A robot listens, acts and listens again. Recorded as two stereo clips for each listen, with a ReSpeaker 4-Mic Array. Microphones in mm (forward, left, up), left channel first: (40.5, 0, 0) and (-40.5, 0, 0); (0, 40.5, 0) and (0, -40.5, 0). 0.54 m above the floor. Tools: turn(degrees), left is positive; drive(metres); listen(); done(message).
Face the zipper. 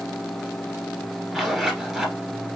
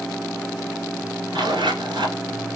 turn(degrees=-95)
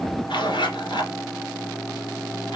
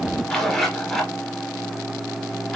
done("Facing the zipper.")